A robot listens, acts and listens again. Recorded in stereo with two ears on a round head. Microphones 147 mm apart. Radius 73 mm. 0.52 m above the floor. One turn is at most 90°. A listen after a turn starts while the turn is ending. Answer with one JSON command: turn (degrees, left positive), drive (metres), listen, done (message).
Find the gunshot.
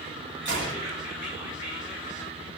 {"turn": -90}
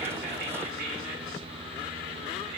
{"done": "I heard a gunshot from this way, but can't make it out now."}